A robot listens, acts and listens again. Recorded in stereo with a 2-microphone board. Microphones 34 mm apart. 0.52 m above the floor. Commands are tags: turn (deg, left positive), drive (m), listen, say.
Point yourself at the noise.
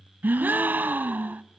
<turn deg="-65"/>
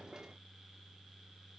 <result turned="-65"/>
<listen/>
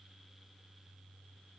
<say>I heard a gasp, but can't make it out now. It was about straight ahead or 50° right.</say>